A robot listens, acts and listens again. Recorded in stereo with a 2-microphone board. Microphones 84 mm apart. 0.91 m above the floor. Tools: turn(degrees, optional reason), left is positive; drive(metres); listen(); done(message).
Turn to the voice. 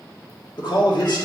turn(degrees=70, reason="The man speaking: about 70° left or 110° left.")
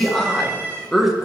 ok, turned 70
done("Found it: a man speaking, straight ahead, 1 to 2 m away.")